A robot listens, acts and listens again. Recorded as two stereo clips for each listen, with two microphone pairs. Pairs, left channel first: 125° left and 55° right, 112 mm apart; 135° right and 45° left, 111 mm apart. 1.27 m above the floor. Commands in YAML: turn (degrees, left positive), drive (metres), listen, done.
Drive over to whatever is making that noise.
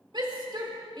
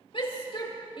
turn: -100
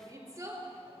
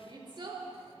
drive: 1.0
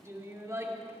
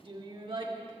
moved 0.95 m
turn: 10
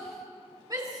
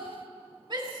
drive: 1.0
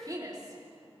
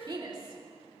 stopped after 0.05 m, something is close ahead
done: "Something is in my way. I am facing the shout but have not reached it."